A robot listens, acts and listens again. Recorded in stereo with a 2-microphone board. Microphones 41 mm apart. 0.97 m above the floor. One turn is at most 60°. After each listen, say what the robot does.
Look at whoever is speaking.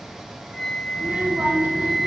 Turn 55° right.
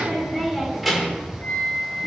Facing the child speaking.